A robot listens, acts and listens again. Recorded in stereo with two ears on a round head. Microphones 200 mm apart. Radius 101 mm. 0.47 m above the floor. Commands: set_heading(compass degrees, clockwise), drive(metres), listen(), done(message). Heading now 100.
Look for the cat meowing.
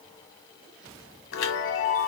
listen()
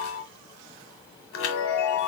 listen()
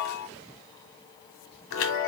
done("I can't make out a cat meowing, only a chime.")